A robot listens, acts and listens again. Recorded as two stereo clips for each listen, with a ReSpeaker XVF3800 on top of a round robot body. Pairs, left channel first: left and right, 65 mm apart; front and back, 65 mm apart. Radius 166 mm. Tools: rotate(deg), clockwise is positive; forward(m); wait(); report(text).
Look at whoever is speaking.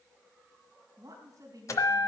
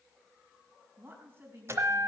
rotate(125)
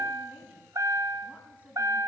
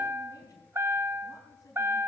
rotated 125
wait()
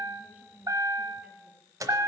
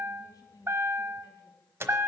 rotate(20)
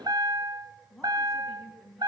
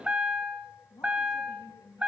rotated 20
report("Found it: a woman speaking, straight ahead.")